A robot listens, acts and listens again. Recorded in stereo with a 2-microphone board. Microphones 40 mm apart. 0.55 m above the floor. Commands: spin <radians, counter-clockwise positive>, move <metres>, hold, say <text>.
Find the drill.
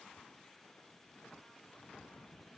hold
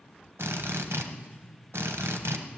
spin -1.57
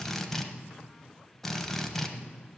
say Found it: a drill, straight ahead, 1 to 2 m away.